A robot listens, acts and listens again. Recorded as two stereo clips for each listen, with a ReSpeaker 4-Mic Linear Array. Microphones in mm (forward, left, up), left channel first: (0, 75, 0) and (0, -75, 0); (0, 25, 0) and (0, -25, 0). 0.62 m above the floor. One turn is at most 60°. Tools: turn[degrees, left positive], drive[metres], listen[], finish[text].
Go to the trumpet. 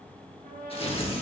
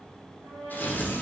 Action: turn[-60]
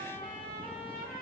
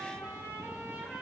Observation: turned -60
Thought: So it is at 40° right.
Action: turn[-40]
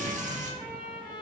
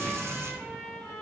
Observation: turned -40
Action: drive[1.0]
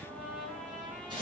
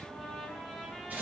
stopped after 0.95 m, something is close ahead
Action: finish[Arrived at the trumpet, straight ahead.]